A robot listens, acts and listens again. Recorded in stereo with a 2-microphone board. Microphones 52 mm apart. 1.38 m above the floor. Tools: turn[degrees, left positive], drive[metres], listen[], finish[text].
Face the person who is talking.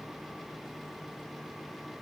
Action: listen[]
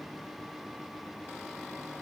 Action: listen[]
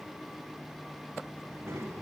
Thought: The child speaking: about 55° right or 125° right.
Action: turn[-55]
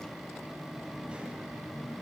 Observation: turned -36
Thought: So it is at 20° right.
Action: turn[-20]
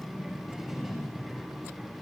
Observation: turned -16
Action: finish[Facing the child speaking.]